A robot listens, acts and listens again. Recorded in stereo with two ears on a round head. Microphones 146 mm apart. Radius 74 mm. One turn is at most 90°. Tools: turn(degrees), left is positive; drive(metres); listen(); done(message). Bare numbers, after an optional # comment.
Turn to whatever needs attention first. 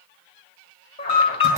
# The alarm: about 35° left or 145° left.
turn(35)
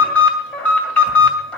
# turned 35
# So it is at 10° left.
turn(10)
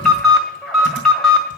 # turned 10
done("Facing the alarm.")